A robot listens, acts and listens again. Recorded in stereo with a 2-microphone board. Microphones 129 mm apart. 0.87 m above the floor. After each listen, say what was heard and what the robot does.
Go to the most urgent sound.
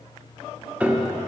Keep listening.
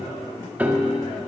Keep listening.
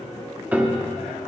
I can't make out anything urgent to turn to.